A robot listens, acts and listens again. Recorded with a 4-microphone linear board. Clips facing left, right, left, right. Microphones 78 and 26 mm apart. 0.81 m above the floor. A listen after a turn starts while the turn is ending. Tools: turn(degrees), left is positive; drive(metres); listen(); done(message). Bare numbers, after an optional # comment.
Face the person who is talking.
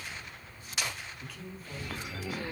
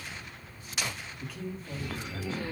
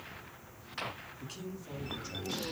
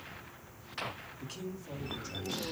turn(30)
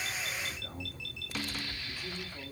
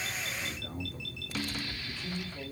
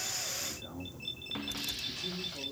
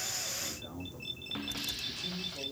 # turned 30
turn(30)
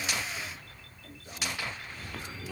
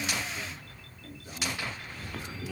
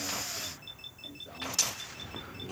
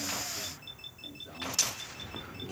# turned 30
listen()
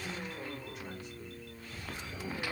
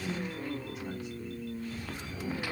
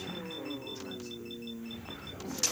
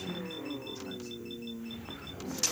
listen()
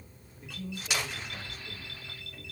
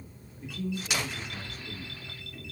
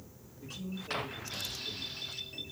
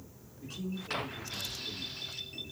turn(30)
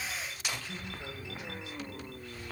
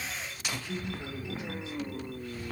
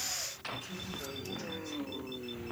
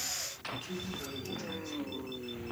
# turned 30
# So it is at 30° right.
turn(-30)
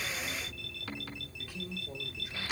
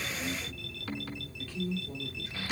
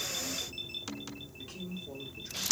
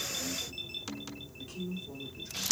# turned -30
# The man speaking is now 15° left.
turn(15)
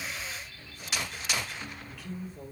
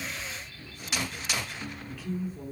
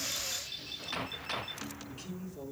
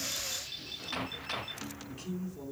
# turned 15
done("Found it: a man speaking, straight ahead.")